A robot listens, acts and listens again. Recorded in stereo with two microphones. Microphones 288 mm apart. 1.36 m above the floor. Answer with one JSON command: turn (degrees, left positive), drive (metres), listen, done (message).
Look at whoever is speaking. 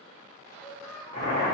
{"turn": 30}
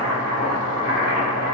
{"listen": true}
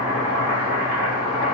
{"listen": true}
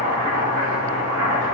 {"done": "I heard a child speaking, but can't make it out now. It was about 30° right or 150° left."}